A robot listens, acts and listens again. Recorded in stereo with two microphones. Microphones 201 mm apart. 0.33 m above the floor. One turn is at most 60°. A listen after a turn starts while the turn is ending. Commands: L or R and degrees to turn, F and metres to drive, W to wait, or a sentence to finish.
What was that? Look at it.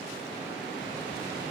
W
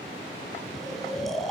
L30
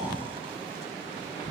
W
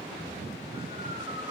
W
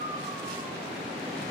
R30
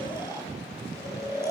R15
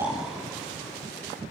W
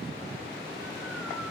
W
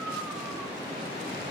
Facing where the snoring came from. I can't hear it now.